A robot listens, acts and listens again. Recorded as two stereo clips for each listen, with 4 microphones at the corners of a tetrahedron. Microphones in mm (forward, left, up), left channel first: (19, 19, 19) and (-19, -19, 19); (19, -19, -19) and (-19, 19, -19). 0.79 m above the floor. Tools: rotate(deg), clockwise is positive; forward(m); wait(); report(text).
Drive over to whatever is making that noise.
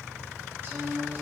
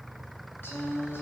rotate(90)
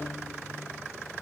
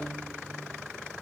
wait()
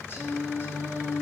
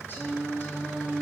forward(1.0)
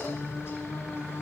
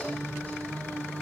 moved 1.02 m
rotate(-10)
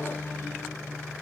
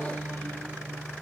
forward(1.0)
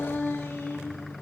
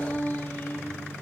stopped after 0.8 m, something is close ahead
report("I am next to the singing.")